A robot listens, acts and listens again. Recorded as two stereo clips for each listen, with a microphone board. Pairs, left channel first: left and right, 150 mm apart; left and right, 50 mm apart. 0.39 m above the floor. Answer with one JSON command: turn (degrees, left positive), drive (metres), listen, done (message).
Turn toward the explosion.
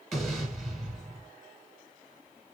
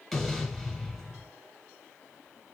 {"turn": 30}
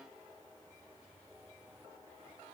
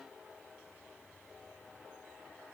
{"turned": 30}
{"listen": true}
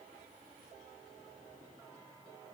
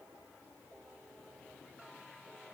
{"done": "I heard an explosion, but can't make it out now. It was about 30° right or 150° left."}